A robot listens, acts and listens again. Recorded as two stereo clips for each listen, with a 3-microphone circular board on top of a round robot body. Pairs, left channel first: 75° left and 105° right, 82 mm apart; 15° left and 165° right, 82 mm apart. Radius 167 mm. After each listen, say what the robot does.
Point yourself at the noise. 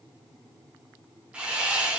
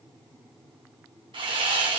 Turn 175° left.
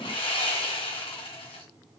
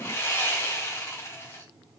Turn 75° left.
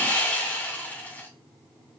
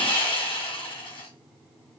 Found it: sawing, straight ahead.